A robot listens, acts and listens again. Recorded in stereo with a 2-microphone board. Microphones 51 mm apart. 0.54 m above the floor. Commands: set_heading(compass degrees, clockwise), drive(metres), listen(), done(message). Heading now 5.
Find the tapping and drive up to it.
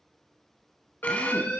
listen()
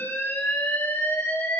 listen()
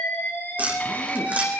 set_heading(35)
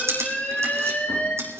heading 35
set_heading(155)
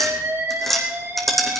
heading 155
drive(1.0)
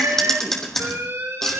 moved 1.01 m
set_heading(145)
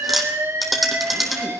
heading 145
drive(1.0)
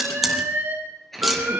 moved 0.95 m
drive(1.0)
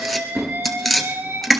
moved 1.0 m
drive(1.0)
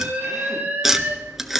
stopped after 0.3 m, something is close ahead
done("Arrived at the tapping, straight ahead.")